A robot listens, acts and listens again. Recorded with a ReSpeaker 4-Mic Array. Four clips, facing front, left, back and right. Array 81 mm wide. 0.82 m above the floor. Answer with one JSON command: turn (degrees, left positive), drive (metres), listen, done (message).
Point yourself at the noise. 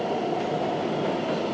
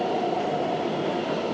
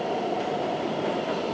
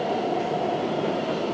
{"listen": true}
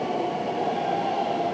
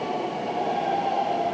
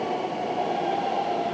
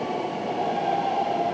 {"listen": true}
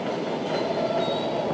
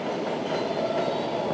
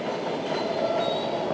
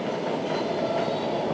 {"done": "I can't make out anything."}